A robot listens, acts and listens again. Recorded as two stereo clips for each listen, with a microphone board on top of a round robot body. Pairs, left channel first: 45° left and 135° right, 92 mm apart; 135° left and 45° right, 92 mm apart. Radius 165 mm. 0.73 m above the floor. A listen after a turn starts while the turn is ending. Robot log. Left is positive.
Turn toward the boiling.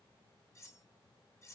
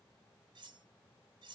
cmd idle
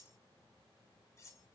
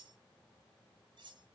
cmd idle
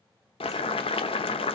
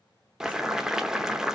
note: The boiling: 40° left.
cmd yaw +40
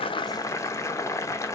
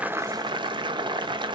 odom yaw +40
note: The boiling is now 15° right.
cmd yaw -15
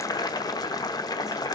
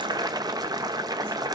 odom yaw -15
end: Facing the boiling.